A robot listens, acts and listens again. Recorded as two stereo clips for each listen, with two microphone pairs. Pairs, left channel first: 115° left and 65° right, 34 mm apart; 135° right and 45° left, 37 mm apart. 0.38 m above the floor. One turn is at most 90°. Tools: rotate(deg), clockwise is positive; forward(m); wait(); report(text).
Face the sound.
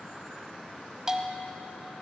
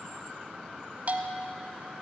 report("Facing the bell, 1 to 2 m away.")